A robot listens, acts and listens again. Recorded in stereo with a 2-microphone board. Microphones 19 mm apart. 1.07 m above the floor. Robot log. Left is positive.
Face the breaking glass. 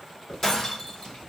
note: The breaking glass: about 30° left or 150° left.
cmd yaw +30
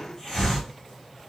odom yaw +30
cmd idle
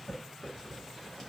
end: I heard breaking glass, but can't make it out now. It was about straight ahead or 120° left.